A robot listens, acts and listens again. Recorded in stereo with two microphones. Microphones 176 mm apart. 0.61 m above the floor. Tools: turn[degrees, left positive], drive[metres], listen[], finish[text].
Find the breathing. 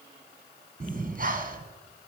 Thought: The breathing: about 55° right or 125° right.
Action: turn[-55]
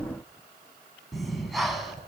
Action: finish[Facing the breathing.]